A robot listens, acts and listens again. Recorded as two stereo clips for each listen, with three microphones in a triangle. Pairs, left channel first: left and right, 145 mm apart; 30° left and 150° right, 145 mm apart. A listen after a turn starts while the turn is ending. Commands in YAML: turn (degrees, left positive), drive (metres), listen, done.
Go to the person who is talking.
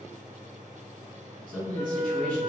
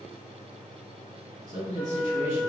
turn: -145
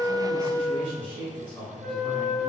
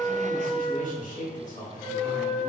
turn: 40
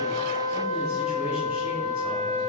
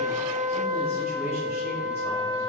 listen: true
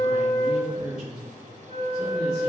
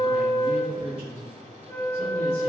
drive: 1.0
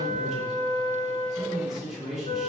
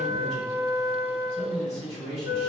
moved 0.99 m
drive: 1.0
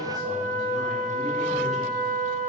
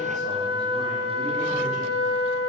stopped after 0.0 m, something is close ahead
listen: true
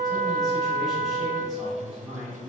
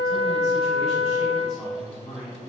done: "I am next to the man speaking."